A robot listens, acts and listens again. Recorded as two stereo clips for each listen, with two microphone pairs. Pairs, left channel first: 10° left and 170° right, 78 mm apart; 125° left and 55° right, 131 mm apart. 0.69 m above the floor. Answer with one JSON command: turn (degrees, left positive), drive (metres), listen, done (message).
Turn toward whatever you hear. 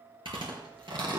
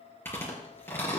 {"turn": -165}
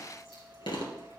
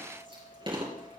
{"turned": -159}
{"done": "Facing the chewing."}